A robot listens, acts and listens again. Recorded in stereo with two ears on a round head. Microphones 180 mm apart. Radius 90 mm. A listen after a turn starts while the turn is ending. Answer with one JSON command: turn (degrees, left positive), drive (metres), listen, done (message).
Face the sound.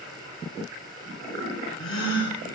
{"turn": 70}
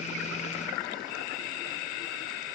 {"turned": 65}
{"listen": true}
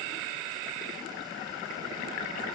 {"done": "I heard a gasp, but can't make it out now. It was about 5° left or 45° left."}